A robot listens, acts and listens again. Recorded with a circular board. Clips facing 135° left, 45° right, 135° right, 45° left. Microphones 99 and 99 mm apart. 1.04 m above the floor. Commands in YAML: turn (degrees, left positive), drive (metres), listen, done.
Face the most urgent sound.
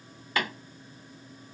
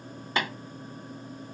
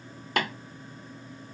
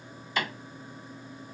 listen: true
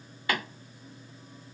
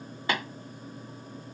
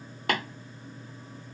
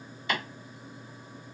listen: true
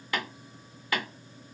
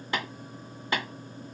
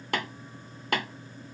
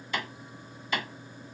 done: "I can't make out anything urgent to turn to."